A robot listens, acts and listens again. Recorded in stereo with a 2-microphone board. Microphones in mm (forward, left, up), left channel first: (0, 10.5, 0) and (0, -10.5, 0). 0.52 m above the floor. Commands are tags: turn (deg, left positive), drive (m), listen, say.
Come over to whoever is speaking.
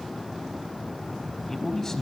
<turn deg="20"/>
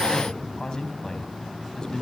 <turn deg="140"/>
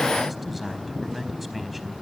<drive m="1.0"/>
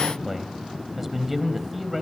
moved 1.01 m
<turn deg="-10"/>
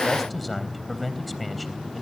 <drive m="1.0"/>
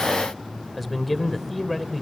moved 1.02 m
<drive m="1.0"/>
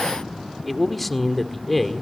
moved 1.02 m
<drive m="1.0"/>
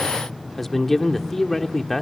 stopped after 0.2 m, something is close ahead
<turn deg="15"/>
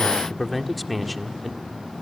<say>Arrived at the man speaking, straight ahead.</say>